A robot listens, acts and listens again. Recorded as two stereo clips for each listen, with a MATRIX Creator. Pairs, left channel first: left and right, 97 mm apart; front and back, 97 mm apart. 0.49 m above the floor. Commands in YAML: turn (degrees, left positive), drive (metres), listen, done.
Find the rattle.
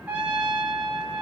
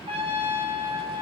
listen: true
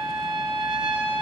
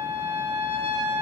listen: true
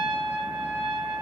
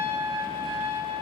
done: "I can't make out a rattle, only a trumpet."